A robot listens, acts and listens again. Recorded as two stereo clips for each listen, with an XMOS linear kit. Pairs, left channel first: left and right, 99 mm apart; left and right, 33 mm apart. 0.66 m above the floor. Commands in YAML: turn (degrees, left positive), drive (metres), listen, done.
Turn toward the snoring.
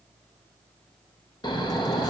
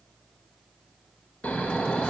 turn: 50
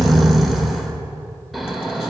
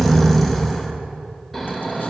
done: "Facing the snoring, under 1 m away."